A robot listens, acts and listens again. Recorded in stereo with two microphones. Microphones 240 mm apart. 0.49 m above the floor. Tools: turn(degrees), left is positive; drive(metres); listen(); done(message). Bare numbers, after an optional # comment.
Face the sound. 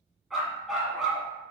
turn(30)
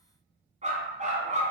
# So it is at 30° right.
turn(-30)
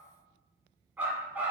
done("Facing the dog barking.")